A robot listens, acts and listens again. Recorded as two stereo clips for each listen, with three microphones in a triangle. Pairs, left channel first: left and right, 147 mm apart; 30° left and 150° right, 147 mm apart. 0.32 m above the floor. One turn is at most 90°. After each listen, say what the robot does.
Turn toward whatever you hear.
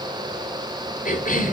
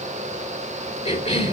Turn 70° left.
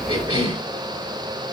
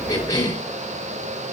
Turn 40° right.
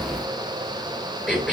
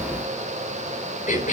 Found it: a cough, straight ahead, over 4 m away.